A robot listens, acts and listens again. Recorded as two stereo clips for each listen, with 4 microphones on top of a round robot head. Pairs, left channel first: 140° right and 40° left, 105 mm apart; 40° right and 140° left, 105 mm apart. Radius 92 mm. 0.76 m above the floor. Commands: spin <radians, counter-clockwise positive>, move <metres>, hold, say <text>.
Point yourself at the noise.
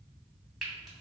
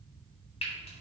spin -0.87
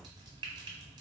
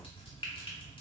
say Facing the frying, 1 to 2 m away.